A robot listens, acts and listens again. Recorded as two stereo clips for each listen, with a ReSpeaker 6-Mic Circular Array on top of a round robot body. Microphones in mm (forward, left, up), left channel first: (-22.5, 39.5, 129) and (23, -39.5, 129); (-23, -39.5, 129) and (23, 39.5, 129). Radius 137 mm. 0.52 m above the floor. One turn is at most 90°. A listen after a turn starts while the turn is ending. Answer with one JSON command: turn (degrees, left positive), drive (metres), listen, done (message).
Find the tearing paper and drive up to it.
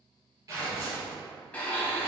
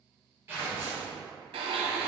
{"drive": 1.0}
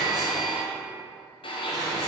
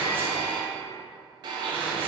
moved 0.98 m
{"listen": true}
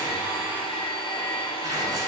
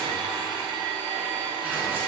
{"listen": true}
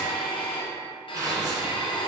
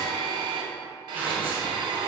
{"turn": -10}
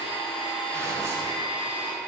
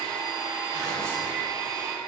{"listen": true}
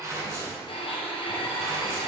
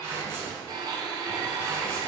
{"drive": 1.0}
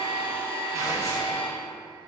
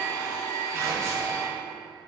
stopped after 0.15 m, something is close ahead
{"listen": true}
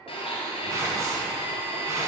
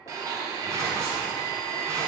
{"listen": true}
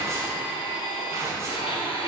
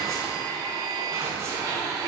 {"done": "I am next to the tearing paper."}